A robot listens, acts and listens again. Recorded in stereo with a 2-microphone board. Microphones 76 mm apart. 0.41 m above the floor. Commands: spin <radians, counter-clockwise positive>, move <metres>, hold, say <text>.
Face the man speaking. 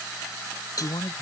spin 1.57
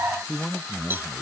say Found it: a man speaking, straight ahead.